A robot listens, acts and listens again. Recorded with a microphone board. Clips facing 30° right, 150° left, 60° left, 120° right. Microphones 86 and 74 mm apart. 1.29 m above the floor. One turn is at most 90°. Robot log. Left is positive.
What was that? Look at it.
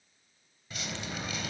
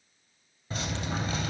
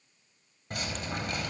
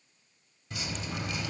note: The dripping: 95° left.
cmd yaw +90
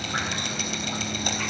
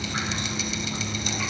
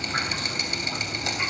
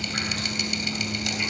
end: Found it: dripping, straight ahead, 2 to 4 m away.